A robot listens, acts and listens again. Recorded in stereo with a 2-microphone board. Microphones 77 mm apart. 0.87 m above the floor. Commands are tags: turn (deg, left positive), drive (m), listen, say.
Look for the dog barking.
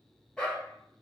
<turn deg="30"/>
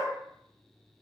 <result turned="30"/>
<turn deg="135"/>
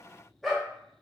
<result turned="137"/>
<say>Found it: a dog barking, straight ahead, under 1 m away.</say>